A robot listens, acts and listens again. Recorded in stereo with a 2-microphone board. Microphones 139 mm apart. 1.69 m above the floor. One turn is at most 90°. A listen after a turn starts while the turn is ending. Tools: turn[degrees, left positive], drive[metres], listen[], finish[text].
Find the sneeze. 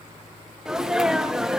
Action: turn[-30]
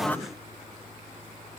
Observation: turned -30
Action: listen[]
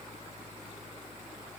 Action: finish[I heard a sneeze, but can't make it out now. It was about 25° left or 145° right.]